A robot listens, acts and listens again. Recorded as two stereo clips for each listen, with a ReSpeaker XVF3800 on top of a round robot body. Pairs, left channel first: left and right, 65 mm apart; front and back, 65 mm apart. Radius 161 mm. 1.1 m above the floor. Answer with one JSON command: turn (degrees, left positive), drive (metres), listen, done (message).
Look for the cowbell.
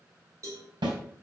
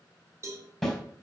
{"turn": -135}
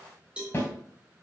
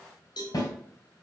{"turn": -15}
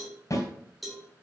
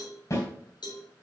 {"done": "Facing the cowbell."}